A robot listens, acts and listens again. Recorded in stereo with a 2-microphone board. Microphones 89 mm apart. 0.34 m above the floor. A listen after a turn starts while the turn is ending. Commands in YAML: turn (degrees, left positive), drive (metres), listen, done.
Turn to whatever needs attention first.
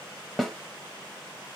listen: true
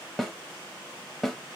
listen: true
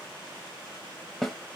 done: "I can't make out anything urgent to turn to."